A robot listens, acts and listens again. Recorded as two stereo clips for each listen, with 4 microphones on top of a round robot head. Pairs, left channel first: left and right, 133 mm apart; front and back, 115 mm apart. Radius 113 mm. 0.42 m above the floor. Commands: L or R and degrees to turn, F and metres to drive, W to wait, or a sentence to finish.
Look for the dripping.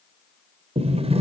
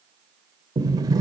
W
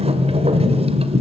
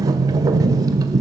W
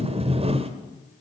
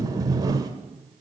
I can't make out dripping to turn to.